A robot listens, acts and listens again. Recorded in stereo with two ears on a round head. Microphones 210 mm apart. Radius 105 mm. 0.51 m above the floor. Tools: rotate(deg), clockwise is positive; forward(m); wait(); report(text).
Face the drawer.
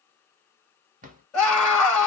rotate(35)
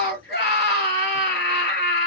wait()
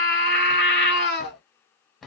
report("Found it: a drawer, straight ahead, under 1 m away.")